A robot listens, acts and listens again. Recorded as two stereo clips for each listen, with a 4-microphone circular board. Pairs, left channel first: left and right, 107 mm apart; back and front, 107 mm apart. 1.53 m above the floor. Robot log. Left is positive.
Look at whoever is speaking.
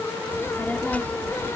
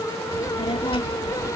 note: The child speaking: 165° left.
cmd yaw +165
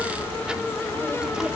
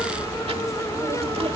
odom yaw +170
note: The child speaking is now 10° right.
cmd yaw -10
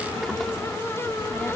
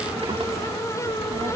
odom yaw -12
end: Found it: a child speaking, straight ahead.